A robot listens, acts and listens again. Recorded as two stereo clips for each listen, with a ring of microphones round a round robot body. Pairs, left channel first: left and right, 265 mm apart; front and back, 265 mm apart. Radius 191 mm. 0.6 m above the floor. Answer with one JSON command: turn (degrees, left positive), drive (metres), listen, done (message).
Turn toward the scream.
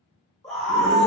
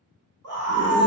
{"turn": 180}
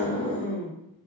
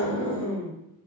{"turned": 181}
{"done": "Facing the scream, 1 to 2 m away."}